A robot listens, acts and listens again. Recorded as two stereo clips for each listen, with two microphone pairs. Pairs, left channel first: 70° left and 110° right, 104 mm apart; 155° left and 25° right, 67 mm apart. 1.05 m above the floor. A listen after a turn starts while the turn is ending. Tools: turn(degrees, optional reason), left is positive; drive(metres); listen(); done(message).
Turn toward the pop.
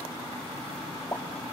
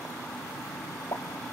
turn(degrees=130, reason="The pop: 130° left.")
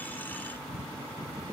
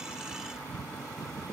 done("Facing where the pop came from. I can't hear it now.")